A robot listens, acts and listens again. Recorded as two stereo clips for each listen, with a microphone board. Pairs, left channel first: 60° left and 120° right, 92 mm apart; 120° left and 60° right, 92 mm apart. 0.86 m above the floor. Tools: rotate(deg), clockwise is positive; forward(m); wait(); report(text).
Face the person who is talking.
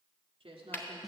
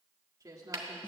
rotate(110)
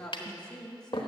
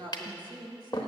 rotate(20)
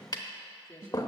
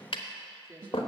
report("Found it: a woman speaking, straight ahead, 1 to 2 m away.")